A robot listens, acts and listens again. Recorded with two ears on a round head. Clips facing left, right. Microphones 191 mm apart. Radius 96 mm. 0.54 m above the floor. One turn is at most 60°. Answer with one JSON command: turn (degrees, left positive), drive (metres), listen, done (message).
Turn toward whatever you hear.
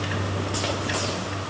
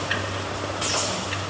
{"listen": true}
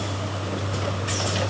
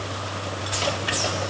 {"listen": true}
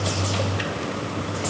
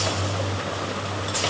{"done": "I can't make out anything."}